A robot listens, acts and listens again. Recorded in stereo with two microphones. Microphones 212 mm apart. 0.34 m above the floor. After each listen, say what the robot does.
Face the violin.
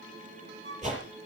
Turn 90° right.
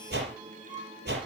Turn 10° right.
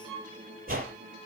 Facing the violin, over 4 m away.